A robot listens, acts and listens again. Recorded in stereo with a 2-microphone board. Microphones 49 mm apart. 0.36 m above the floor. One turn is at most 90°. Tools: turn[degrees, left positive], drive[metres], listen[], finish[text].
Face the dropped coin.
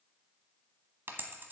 Thought: The dropped coin: about 50° right or 130° right.
Action: turn[-50]
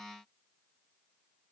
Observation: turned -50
Action: listen[]
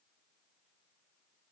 Action: finish[I heard a dropped coin, but can't make it out now. It was about straight ahead or 80° right.]